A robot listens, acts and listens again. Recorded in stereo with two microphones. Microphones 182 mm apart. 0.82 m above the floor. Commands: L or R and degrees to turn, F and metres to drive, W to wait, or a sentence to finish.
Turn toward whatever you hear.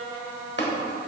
L90
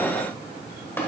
L15
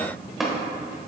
Found it: tapping, straight ahead, 1 to 2 m away.